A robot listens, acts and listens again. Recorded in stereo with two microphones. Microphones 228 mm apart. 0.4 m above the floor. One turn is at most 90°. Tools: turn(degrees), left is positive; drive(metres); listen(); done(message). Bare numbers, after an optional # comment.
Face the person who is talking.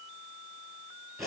listen()
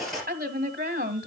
# The woman speaking: about 40° right or 140° right.
turn(-40)
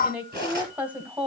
# So it is at 10° right.
turn(-10)
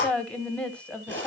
done("Found it: a woman speaking, straight ahead, 1 to 2 m away.")